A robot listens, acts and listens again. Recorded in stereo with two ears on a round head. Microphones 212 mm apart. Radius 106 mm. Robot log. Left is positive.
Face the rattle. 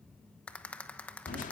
cmd yaw +30
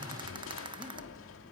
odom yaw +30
note: So it is at 25° right.
cmd yaw -25
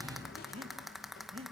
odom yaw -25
end: Facing the rattle, 1 to 2 m away.